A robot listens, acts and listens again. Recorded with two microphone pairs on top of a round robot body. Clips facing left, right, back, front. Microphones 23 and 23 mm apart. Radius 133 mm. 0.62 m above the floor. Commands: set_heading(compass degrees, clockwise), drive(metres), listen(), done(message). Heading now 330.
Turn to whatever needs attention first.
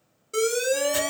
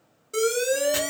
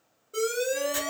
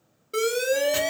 done("Found it: an alarm, straight ahead.")